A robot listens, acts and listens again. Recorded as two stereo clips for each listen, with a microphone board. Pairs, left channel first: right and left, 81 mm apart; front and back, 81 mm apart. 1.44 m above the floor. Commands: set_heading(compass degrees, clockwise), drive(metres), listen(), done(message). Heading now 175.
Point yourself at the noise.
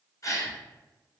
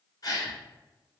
set_heading(215)
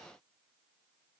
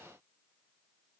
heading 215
done("I heard a gasp from this way, but can't make it out now.")